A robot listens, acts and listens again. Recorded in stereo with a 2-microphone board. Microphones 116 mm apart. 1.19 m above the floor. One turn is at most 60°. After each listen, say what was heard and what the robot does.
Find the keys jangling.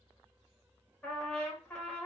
Keep listening.
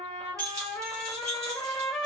The keys jangling: about 30° right or 150° right. Turn 30° right.
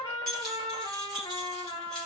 Found it: keys jangling, straight ahead.